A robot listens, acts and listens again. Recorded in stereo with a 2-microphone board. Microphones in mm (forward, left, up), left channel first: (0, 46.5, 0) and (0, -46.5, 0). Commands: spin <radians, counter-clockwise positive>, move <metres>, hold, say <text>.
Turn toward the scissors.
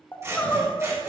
spin -0.52
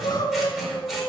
say Found it: scissors, straight ahead.